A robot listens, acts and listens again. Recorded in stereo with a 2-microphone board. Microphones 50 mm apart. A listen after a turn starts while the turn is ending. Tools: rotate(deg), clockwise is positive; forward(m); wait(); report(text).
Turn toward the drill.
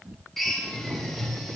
rotate(-30)
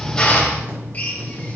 rotate(-145)
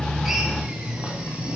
wait()
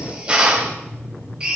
rotate(25)
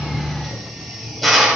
report("Facing the drill, 2 to 4 m away.")